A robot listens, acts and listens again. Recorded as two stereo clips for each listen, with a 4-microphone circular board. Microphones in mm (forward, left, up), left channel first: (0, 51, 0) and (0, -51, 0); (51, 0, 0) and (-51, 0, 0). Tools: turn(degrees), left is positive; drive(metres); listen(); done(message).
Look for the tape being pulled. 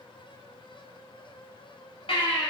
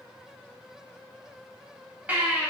listen()
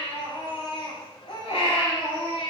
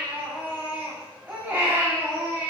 listen()
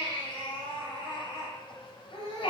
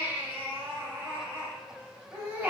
done("I can't make out tape being pulled, only a baby crying.")